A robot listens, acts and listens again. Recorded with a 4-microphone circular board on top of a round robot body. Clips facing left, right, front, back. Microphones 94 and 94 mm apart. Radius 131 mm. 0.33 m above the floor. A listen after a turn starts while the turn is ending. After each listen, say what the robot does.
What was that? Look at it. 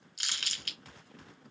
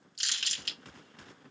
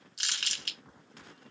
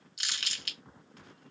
Turn 55° left.
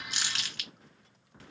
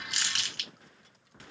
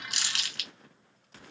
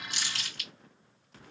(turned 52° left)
Facing the crumpling, 1 to 2 m away.